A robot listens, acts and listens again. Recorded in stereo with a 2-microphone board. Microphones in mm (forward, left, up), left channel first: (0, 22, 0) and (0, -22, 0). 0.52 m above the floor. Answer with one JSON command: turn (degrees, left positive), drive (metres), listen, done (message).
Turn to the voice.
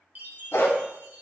{"listen": true}
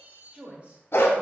{"turn": -25}
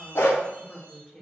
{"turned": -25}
{"turn": 15}
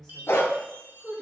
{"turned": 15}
{"turn": 25}
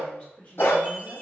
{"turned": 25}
{"turn": 40}
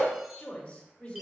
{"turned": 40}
{"turn": 25}
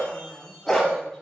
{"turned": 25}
{"done": "Facing the woman speaking."}